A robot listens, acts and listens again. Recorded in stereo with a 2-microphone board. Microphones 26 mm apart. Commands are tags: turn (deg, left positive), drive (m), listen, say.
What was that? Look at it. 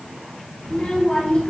<turn deg="55"/>
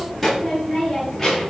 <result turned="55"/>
<say>Found it: a child speaking, straight ahead.</say>